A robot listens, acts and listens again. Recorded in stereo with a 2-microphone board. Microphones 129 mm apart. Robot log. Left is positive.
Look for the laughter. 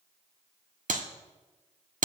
cmd idle
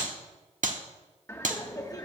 note: The laughter: about 30° left or 150° left.
cmd yaw +30
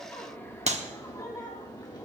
note: The laughter: about 35° left or 145° left.
cmd yaw +35
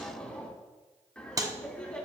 note: So it is at 10° left.
cmd yaw +10
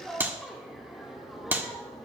end: Found it: laughter, straight ahead, 2 to 4 m away.